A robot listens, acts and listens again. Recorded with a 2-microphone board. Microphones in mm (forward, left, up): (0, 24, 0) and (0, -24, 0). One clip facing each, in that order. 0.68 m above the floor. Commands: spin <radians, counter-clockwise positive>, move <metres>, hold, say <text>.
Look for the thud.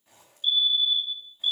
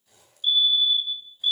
hold
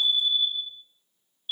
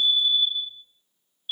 hold
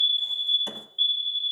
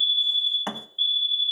spin -1.05
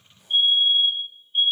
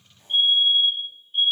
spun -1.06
hold
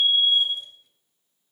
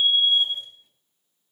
say I heard a thud, but can't make it out now. It was about 5° left or 60° right.